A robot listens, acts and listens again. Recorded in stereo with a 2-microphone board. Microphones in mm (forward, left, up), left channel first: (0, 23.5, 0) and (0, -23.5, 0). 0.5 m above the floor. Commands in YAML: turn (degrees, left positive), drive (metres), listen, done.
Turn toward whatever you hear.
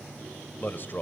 turn: 50
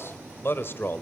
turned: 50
turn: 50
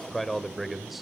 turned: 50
done: "Facing the man speaking."